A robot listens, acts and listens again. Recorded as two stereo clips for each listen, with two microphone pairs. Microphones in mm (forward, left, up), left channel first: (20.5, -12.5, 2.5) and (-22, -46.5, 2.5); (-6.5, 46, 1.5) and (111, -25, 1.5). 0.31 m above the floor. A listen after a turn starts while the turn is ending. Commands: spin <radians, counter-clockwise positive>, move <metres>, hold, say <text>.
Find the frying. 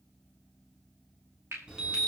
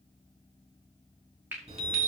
spin -1.83
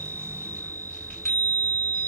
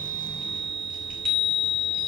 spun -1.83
hold
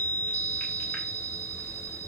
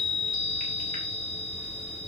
hold
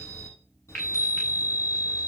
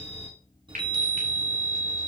spin -0.35
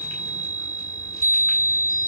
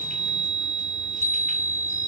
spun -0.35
hold
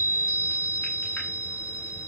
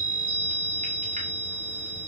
hold
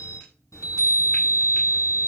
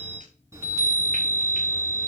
say Facing where the frying came from. I can't hear it now.